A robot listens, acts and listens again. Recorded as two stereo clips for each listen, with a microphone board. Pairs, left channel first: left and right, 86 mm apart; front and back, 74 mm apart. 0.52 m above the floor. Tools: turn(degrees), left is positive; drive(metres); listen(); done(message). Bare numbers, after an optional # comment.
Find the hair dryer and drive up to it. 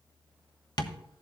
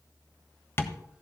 listen()
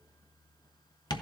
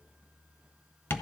listen()
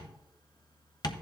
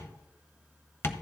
done("I can't make out a hair dryer, only tapping.")